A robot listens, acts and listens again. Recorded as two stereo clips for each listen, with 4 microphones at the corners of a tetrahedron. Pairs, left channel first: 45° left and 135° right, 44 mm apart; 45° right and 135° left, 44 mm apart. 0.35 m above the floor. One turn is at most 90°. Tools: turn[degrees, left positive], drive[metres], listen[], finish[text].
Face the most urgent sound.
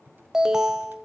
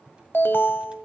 Thought: The alarm: 60° right.
Action: turn[-60]
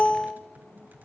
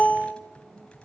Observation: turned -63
Action: finish[Found it: an alarm, straight ahead.]